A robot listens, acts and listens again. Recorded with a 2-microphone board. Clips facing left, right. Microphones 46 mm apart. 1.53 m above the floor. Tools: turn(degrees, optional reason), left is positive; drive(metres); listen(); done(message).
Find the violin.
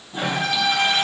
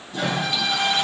turn(degrees=55, reason="The violin: about 55° left or 125° left.")
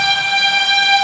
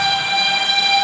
turn(degrees=70, reason="So it is at 70° left.")
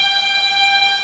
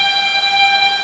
done("Found it: a violin, straight ahead.")